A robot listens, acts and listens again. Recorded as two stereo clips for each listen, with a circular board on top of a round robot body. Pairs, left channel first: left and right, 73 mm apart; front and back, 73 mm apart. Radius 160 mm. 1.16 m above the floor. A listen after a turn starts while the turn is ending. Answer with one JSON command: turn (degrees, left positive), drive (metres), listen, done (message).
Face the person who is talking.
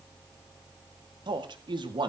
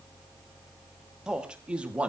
{"turn": -105}
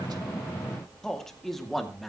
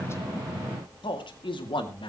{"done": "Facing the man speaking."}